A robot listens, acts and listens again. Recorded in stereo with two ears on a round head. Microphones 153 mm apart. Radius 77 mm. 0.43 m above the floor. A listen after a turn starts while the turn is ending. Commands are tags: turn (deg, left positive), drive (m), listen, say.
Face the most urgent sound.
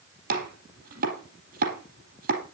<listen/>
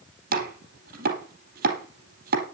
<listen/>
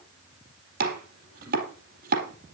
<say>I can't make out anything urgent to turn to.</say>